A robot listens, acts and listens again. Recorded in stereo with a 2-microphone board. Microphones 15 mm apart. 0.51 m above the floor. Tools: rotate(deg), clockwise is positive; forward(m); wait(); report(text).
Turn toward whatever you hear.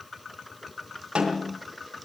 rotate(90)
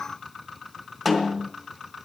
rotate(10)
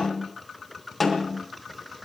report("Facing the snare drum.")